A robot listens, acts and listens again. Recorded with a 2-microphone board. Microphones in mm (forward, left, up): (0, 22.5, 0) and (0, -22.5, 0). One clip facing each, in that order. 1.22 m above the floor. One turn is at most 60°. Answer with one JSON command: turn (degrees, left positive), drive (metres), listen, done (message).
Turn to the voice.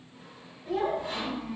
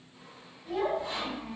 {"turn": -30}
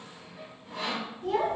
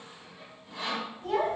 {"turn": -60}
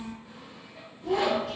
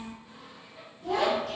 {"turn": -60}
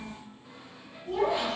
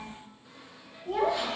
{"turn": -60}
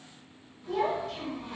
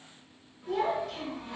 {"done": "Facing the child speaking."}